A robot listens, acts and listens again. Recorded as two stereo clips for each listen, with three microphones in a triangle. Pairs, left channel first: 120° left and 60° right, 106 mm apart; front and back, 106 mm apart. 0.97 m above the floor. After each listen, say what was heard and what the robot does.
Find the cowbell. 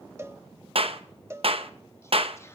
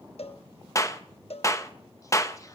Found it: a cowbell, straight ahead.